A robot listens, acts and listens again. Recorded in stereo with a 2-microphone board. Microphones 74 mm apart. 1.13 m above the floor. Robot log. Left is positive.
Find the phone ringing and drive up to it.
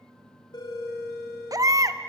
note: The phone ringing: about 60° left or 120° left.
cmd yaw +60
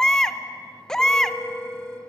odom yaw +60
cmd fwd 1.0
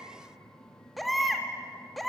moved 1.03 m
cmd idle
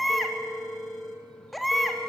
cmd fwd 1.0
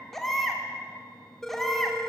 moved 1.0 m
cmd fwd 1.0
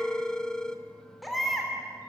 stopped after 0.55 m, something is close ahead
note: The phone ringing is now 10° left.
cmd yaw +10
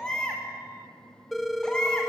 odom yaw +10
end: I am next to the phone ringing.